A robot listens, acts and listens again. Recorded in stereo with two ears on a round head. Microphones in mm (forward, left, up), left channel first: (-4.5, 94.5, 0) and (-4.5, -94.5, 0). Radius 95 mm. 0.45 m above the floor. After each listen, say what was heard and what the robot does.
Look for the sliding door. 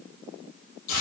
Keep listening.
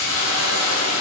Keep listening.
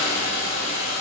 I can't make out a sliding door, only a hiss.